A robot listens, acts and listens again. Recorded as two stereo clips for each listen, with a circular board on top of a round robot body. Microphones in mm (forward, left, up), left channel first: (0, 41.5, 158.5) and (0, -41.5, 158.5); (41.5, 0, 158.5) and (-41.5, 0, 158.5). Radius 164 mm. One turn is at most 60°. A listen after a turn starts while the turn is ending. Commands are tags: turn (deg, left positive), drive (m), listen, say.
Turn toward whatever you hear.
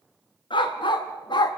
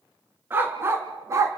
<turn deg="60"/>
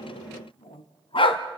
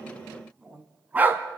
<turn deg="60"/>
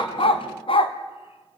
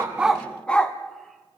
<turn deg="60"/>
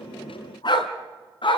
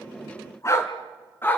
<turn deg="60"/>
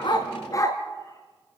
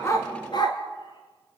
<turn deg="40"/>
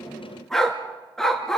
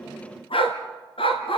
<say>Facing the dog barking.</say>